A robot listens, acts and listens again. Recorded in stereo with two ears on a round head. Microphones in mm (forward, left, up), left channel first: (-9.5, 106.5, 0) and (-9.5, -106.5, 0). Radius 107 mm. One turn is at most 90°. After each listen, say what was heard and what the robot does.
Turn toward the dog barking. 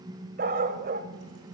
The dog barking: about 40° right or 140° right. Turn 40° right.
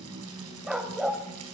Found it: a dog barking, straight ahead.